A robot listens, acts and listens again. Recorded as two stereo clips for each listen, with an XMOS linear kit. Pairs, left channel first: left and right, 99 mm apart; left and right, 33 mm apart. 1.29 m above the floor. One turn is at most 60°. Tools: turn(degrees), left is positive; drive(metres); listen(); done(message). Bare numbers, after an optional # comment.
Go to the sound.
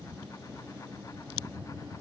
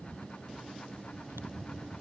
listen()
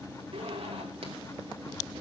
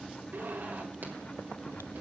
turn(-60)
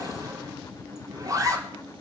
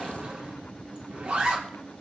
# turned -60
# So it is at 35° right.
turn(-35)
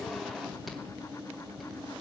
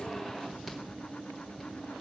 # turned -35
listen()
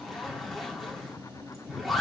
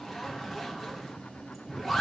drive(1.0)
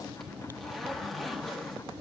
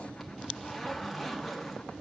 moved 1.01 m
drive(1.0)
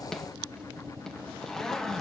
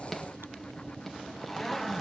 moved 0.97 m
drive(1.0)
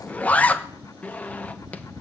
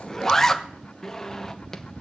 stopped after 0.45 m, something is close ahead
# The zipper is now 15° left.
turn(15)
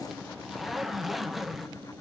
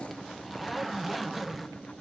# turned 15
done("I am next to the zipper.")